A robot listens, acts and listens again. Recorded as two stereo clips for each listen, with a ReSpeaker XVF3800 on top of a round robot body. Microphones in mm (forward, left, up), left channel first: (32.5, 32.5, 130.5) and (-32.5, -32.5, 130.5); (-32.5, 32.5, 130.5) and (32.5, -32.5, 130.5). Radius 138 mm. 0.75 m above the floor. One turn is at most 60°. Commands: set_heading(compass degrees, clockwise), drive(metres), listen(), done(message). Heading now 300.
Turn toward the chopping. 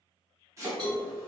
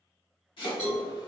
set_heading(240)
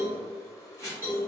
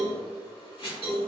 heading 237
set_heading(177)
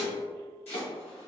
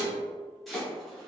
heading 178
set_heading(133)
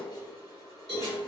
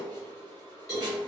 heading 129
listen()
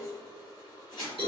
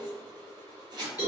done("Facing the chopping.")